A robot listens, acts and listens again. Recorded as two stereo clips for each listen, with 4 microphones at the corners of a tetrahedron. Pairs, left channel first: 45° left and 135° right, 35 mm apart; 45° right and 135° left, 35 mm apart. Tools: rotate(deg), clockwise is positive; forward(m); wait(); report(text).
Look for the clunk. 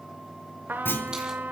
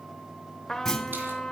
rotate(-30)
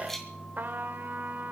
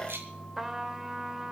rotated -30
report("I heard a clunk from this way, but can't make it out now.")